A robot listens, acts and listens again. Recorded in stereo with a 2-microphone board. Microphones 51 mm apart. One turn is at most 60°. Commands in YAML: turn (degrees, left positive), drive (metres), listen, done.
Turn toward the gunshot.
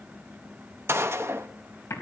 turn: -55
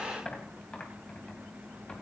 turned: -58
listen: true
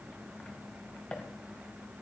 done: "I heard a gunshot, but can't make it out now. It was about 5° left or 65° right."